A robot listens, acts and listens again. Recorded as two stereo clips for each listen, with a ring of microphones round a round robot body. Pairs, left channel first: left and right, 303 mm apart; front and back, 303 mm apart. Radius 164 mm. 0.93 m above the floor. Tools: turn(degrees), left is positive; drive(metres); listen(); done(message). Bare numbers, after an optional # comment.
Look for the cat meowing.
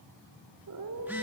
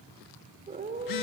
# The cat meowing: 115° right.
turn(-115)
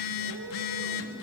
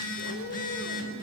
listen()
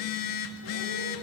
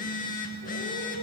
listen()
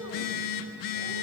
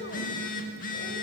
# The cat meowing is now 50° right.
turn(-50)
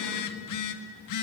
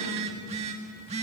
listen()
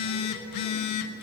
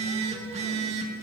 listen()
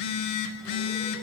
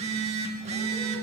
done("Facing where the cat meowing came from. I can't hear it now.")